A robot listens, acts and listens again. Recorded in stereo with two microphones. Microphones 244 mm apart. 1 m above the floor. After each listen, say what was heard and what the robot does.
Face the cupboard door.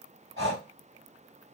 Keep listening.
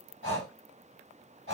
Keep listening.
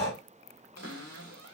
Turn 90° right.
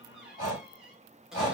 Found it: a cupboard door, straight ahead.